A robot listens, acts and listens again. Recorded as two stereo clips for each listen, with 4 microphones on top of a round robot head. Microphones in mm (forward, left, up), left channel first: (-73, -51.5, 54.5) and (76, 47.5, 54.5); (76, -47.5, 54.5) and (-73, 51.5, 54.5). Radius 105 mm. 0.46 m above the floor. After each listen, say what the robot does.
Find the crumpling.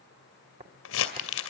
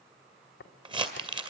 Turn 150° right.
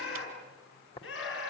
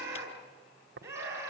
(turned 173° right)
Turn 25° left.
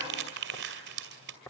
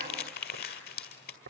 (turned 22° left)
Found it: crumpling, straight ahead.